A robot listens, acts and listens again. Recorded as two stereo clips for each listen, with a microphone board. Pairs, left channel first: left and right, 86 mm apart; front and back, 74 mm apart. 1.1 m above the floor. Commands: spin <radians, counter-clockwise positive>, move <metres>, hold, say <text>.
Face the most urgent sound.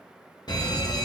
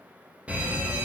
spin 1.92
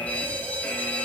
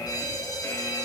spin 0.35
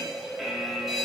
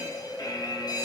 say Facing the fire alarm, 2 to 4 m away.